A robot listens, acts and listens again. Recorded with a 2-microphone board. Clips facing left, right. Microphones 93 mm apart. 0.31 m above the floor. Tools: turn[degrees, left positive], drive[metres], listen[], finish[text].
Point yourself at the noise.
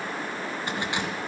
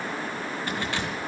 Thought: The keys jangling: about 20° left or 160° left.
Action: turn[20]
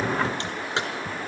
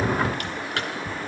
Thought: The keys jangling: about 20° left or 160° left.
Action: turn[20]
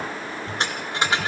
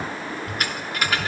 Thought: The keys jangling: about 25° left or 155° left.
Action: turn[25]
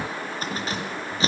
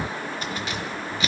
Thought: The keys jangling: about 35° left or 145° left.
Action: turn[35]
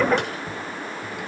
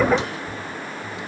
Thought: So it is at 120° left.
Action: turn[120]
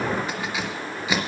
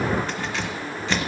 Thought: The keys jangling is now 10° left.
Action: turn[10]
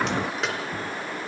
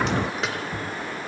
Action: finish[Found it: keys jangling, straight ahead, 2 to 4 m away.]